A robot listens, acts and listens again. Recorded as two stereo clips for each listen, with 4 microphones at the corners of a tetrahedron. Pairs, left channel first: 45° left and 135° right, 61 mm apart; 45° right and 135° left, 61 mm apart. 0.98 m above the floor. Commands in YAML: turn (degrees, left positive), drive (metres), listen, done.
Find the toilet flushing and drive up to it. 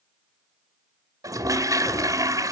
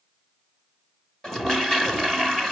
turn: -130
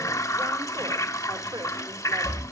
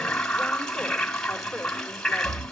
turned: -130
turn: 35
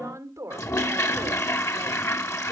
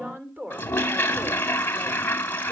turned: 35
turn: 10
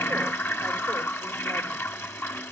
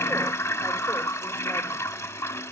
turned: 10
drive: 1.0
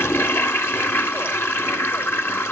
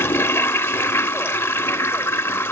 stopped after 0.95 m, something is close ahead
done: "Arrived at the toilet flushing, straight ahead."